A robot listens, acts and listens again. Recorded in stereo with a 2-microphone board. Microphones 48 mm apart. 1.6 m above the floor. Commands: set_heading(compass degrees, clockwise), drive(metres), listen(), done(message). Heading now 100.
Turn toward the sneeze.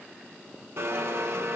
listen()
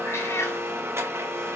listen()
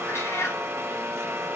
done("I can't make out a sneeze, only a cat meowing and a blender.")